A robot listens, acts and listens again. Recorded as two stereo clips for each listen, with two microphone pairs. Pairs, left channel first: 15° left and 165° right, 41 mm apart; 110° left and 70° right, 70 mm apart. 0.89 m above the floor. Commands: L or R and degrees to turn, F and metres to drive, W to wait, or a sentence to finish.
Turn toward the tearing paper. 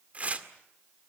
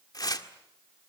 L140
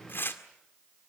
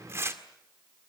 R15
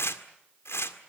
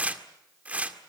Found it: tearing paper, straight ahead.